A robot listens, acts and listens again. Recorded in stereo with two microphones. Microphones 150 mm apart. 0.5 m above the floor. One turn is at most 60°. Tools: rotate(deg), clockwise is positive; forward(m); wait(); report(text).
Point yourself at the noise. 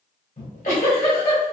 rotate(-60)
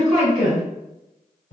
rotate(-55)
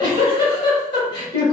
rotate(-30)
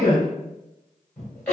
rotate(-10)
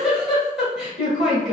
report("Found it: a giggle, straight ahead, 1 to 2 m away.")